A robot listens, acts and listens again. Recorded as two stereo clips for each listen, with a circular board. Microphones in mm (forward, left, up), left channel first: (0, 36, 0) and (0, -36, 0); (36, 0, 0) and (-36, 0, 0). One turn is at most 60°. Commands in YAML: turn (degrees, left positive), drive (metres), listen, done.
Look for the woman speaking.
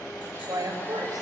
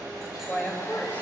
turn: -60
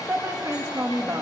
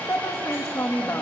turn: -35
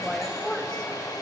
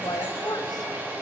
turn: 10
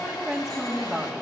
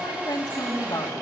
done: "Found it: a woman speaking, straight ahead."